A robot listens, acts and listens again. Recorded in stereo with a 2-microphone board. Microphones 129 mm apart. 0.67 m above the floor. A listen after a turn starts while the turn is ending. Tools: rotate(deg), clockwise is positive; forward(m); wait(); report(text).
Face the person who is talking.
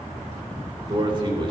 rotate(40)
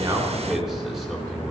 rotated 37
report("Facing the man speaking, 2 to 4 m away.")